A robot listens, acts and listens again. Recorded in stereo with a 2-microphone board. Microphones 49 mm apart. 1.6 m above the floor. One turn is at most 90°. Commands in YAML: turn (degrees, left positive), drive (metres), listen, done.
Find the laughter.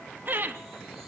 turn: -40
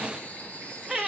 done: "Facing the laughter, 2 to 4 m away."